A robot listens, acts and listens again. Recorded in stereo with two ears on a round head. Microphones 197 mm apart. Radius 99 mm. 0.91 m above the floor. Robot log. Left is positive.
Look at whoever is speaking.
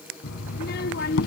note: The child speaking: about 45° left or 135° left.
cmd yaw +45
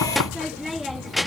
end: Found it: a child speaking, straight ahead.